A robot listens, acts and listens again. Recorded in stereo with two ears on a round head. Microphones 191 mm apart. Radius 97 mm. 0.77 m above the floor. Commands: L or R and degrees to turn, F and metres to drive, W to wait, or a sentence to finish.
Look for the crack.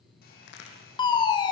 L60
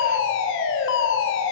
W
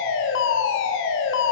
I heard a crack, but can't make it out now. It was about straight ahead or 60° left.